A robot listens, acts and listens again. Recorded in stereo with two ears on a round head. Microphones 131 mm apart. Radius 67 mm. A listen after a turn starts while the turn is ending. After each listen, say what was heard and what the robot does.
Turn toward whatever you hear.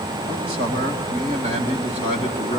The man speaking: about 50° right or 130° right. Turn 50° right.
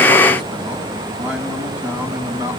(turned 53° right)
So it is at 10° right. Turn 10° right.
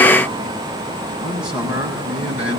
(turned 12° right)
The man speaking is now 10° right. Turn 10° right.
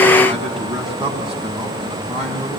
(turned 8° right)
Found it: a man speaking, straight ahead, over 4 m away.